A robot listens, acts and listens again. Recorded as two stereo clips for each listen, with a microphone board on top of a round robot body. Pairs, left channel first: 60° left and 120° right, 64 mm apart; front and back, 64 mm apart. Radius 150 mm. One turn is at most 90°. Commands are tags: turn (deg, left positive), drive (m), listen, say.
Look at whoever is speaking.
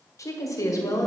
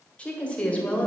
<turn deg="70"/>
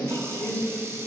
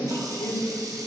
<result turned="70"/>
<turn deg="10"/>
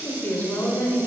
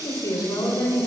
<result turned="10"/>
<say>Facing the woman speaking.</say>